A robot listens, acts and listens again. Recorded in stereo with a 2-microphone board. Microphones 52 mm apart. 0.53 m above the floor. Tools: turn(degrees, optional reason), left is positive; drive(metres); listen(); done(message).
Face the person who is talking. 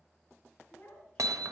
turn(degrees=20, reason="The child speaking: about 20° left or 160° left.")
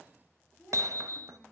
done("Found it: a child speaking, straight ahead, 2 to 4 m away.")